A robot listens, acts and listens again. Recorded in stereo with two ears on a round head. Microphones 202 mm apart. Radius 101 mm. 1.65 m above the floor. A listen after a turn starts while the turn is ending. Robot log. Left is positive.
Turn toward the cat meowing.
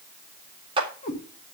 note: The cat meowing: about 30° left or 150° left.
cmd yaw +30
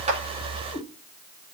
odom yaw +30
end: Found it: a cat meowing, straight ahead.